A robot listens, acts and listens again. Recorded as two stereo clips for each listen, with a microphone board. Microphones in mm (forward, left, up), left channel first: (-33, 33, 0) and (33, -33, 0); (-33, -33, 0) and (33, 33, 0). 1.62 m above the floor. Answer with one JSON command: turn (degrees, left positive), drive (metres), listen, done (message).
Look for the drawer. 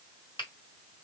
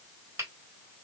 {"listen": true}
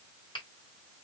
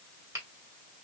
{"listen": true}
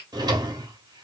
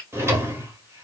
{"turn": -10}
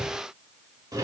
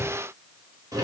{"done": "Facing the drawer."}